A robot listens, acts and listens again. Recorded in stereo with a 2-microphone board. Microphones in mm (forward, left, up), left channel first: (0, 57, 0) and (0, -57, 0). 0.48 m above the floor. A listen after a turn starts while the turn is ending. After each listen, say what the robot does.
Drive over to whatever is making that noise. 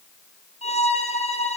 Turn 70° left.
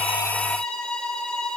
Drive 1.0 m forward.
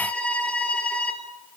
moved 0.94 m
Turn 10° left.
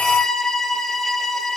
Drive 1.0 m forward.
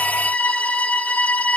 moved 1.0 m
Turn 10° left.
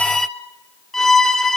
Drive 1.0 m forward.
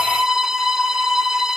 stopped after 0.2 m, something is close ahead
I am next to the violin.